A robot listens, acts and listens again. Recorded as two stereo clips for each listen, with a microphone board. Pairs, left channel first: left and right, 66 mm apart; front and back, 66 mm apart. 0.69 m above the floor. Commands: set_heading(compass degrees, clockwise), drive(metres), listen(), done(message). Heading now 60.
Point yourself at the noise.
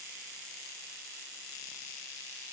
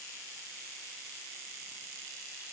listen()
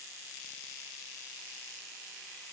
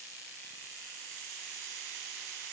listen()
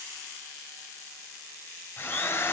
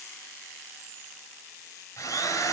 set_heading(25)
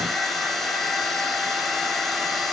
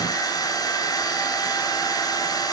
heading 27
done("Facing the drill, over 4 m away.")